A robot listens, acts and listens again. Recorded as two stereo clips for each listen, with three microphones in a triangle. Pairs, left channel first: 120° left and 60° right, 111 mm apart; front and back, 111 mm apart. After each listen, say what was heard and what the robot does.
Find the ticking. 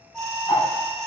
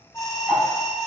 The ticking: 90° left. Turn 90° left.
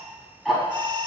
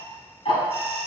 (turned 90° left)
The ticking is now 30° left. Turn 30° left.
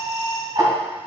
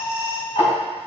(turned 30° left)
The ticking is now 10° right. Turn 10° right.
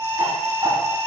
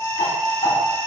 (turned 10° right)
Found it: ticking, straight ahead, 2 to 4 m away.